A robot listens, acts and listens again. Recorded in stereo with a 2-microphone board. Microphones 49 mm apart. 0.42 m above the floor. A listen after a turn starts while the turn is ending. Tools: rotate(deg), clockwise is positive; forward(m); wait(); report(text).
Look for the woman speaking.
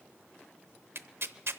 wait()
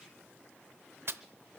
wait()
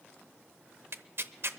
report("I can't make out a woman speaking, only tearing paper.")